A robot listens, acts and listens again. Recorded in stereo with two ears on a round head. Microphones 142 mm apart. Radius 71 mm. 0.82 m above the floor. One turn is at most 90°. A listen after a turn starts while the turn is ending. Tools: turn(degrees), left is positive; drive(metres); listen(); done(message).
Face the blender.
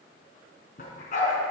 listen()
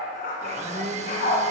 turn(degrees=-45)
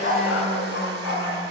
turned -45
listen()
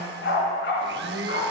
turn(degrees=-90)
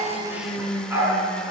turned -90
done("Found it: a blender, straight ahead, under 1 m away.")